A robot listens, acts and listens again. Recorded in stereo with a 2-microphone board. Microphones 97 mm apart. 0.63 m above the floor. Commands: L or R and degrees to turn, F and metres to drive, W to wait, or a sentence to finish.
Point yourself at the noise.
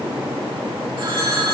R60
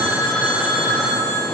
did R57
Found it: a phone ringing, straight ahead.